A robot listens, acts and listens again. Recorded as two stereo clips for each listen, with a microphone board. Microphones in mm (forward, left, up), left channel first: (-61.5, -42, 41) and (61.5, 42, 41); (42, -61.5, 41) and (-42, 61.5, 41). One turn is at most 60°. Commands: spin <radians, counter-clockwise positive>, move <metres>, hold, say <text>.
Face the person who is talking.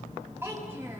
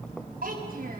spin 1.05
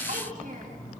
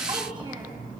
spin 0.87
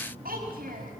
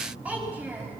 spin 0.79
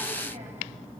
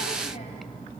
hold
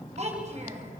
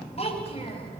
say Found it: a child speaking, straight ahead, over 4 m away.